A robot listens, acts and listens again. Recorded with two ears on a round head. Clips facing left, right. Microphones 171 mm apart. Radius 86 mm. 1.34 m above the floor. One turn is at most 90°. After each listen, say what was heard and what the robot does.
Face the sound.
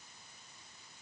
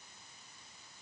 Keep listening.
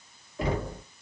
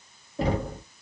The knocking: about 30° right or 150° right. Turn 30° right.
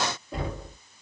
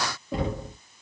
So it is at 115° right. Turn 90° right.
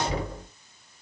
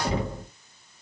The knocking is now 25° right. Turn 25° right.
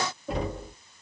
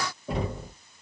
Found it: knocking, straight ahead, 1 to 2 m away.